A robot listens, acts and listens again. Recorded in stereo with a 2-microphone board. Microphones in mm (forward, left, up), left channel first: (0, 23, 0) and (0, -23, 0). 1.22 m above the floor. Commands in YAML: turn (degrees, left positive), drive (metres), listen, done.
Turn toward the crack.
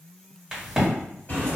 turn: -30
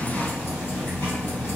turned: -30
listen: true
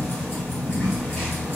done: "I heard a crack, but can't make it out now. It was about 20° left or 140° right."